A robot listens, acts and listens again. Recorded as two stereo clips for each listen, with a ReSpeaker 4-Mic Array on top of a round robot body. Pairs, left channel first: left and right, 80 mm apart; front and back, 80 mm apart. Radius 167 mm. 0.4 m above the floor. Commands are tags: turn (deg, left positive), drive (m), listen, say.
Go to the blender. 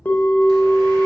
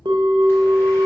<listen/>
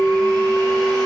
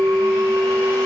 <listen/>
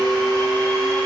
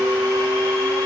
<say>I can't make out a blender, only a bell.</say>